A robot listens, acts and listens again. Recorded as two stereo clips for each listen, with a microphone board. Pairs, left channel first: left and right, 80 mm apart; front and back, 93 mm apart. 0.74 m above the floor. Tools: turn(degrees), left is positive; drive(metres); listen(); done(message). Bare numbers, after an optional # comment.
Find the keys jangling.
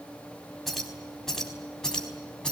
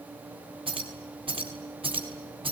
# The keys jangling: 170° left.
turn(170)
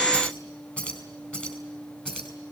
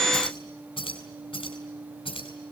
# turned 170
# The keys jangling is now 10° left.
turn(10)
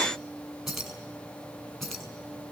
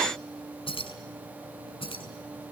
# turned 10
done("Facing the keys jangling, over 4 m away.")